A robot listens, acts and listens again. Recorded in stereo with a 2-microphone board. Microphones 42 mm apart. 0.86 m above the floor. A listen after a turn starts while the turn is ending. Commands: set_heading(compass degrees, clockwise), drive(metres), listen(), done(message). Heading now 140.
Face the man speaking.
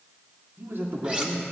set_heading(195)
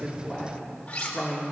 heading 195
set_heading(185)
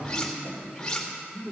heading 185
set_heading(175)
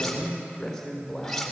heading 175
done("Found it: a man speaking, straight ahead, 2 to 4 m away.")